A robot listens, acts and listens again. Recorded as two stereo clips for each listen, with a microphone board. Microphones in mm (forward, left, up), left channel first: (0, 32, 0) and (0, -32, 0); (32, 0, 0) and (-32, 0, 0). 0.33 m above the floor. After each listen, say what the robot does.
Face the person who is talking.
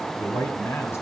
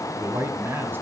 Turn 130° left.
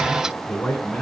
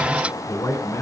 Turn 15° left.
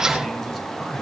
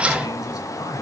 Facing the man speaking.